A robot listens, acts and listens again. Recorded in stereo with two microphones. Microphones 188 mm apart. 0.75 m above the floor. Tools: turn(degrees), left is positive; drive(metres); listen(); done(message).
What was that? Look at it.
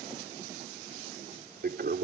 turn(degrees=-65)
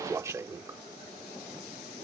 turn(degrees=-20)
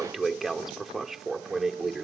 done("Facing the toilet flushing.")